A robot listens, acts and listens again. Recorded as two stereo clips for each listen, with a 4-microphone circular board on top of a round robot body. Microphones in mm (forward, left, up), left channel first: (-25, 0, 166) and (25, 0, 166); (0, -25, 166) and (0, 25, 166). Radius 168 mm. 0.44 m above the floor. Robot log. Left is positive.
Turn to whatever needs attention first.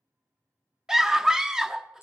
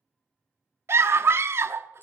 note: The scream: 80° left.
cmd yaw +80
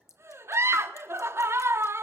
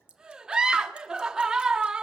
note: The scream is now 15° left.
cmd yaw +15
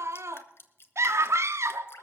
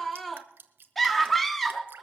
end: Facing the scream.